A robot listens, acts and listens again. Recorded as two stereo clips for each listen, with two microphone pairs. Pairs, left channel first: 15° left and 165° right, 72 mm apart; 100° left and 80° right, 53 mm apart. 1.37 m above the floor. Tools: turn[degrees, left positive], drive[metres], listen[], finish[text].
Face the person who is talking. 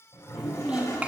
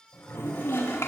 Thought: The child speaking: 125° left.
Action: turn[125]
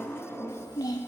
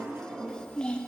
Thought: The child speaking is now 30° left.
Action: turn[30]
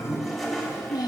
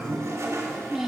Action: finish[Facing the child speaking, 1 to 2 m away.]